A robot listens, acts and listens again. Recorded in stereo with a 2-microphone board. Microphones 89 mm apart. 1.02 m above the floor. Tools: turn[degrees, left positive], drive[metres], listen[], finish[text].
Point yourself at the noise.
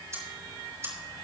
Thought: The ticking: about 35° right or 145° right.
Action: turn[-35]
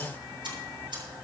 Thought: So it is at 115° right.
Action: turn[-115]
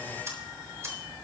Thought: The ticking is now 30° right.
Action: turn[-30]
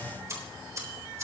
Thought: The ticking is now 30° right.
Action: turn[-30]
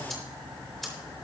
Action: finish[Found it: ticking, straight ahead, over 4 m away.]